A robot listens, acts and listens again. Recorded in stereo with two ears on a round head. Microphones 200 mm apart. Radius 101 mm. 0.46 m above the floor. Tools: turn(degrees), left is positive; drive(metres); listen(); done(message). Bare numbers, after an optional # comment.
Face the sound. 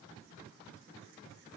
listen()
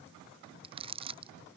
# The crumpling: about 25° right or 155° right.
turn(-25)
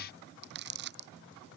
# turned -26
# So it is at 125° right.
turn(-125)
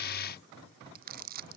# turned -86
# The crumpling is now 40° right.
turn(-40)
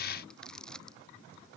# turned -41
done("Found it: crumpling, straight ahead.")